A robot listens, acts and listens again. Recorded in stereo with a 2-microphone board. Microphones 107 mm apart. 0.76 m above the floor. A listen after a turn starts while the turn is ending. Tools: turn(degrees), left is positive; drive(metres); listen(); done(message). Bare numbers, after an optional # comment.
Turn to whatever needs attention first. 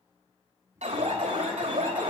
turn(-90)
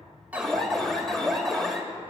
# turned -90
done("Facing the alarm.")